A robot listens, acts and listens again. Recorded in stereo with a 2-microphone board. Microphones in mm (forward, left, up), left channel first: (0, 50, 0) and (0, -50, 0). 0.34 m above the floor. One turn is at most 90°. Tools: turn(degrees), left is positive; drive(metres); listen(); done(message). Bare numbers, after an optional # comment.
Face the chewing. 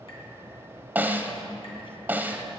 listen()
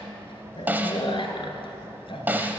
# The chewing: about 60° left or 120° left.
turn(60)
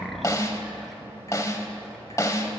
done("Facing the chewing, 1 to 2 m away.")